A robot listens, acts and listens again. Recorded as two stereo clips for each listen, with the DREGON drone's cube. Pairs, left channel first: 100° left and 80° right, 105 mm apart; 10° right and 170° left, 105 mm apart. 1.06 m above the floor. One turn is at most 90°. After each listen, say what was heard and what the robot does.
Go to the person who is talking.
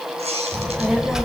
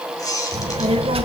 The child speaking: 165° right. Turn 90° right.
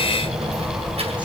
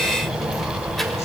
The child speaking is now 100° right. Turn 90° right.
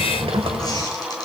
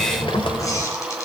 The child speaking is now 50° right. Turn 50° right.
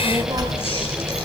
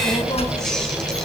The child speaking is now 25° right. Turn 25° right.
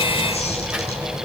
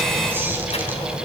Drive 1.0 m forward.
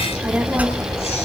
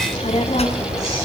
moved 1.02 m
Drive 1.0 m forward.
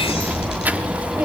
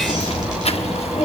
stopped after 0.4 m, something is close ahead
I am next to the child speaking.